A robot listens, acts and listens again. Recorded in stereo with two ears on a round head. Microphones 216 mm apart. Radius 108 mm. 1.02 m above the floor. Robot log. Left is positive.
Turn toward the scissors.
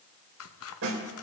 note: The scissors: about 65° left or 115° left.
cmd yaw +65
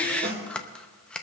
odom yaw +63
end: Facing the scissors.